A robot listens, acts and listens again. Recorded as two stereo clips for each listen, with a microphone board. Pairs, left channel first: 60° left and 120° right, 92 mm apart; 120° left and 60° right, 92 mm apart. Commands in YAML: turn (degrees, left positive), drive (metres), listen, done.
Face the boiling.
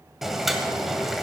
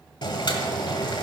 turn: 155
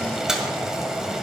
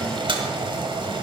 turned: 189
turn: -35
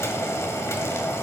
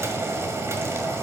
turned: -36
done: "Found it: boiling, straight ahead, 1 to 2 m away."